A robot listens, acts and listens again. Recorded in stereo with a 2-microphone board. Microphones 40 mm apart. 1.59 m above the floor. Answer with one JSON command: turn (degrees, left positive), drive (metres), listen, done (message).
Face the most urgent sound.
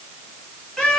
{"listen": true}
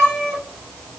{"listen": true}
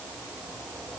{"done": "I can't make out anything urgent to turn to."}